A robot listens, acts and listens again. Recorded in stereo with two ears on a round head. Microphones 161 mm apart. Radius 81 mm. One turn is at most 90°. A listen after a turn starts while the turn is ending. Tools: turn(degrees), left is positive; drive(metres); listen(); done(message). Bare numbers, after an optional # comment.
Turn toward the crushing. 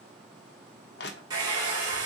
# The crushing: about 60° left or 120° left.
turn(60)
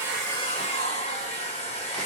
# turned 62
listen()
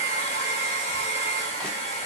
listen()
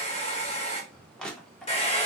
done("Found it: crushing, straight ahead.")